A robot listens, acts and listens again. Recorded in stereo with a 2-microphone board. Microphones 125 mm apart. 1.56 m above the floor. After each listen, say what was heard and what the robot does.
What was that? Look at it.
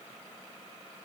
Keep listening.
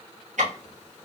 Turn 90° right.
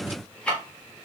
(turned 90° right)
So it is at 10° left. Turn 10° left.
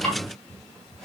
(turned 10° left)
Keep listening.
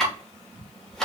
Facing the ticking, 1 to 2 m away.